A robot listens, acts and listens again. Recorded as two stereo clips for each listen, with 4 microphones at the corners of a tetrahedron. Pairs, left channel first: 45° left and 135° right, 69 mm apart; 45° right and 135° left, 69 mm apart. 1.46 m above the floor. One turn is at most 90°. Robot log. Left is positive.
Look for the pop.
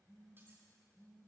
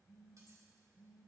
cmd idle
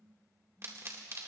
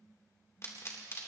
note: The pop: 90° right.
cmd yaw -90
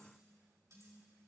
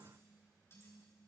end: I heard a pop from this way, but can't make it out now.